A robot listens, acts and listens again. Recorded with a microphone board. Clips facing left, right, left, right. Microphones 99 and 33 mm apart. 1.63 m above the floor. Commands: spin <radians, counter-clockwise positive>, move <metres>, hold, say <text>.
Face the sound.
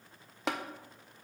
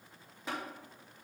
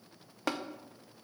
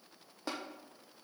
spin 1.57
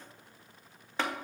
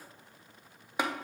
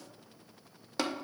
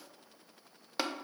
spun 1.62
spin -0.26
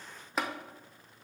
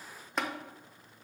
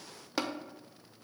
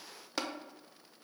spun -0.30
say Facing the tapping.